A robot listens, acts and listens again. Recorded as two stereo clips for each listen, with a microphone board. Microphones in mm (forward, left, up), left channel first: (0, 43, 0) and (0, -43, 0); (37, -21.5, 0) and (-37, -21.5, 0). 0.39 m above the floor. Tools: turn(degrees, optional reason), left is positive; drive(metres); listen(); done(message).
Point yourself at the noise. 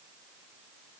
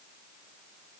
listen()
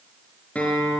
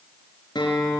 turn(degrees=15, reason="The guitar: 15° left.")
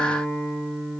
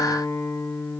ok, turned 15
done("Found it: a guitar, straight ahead.")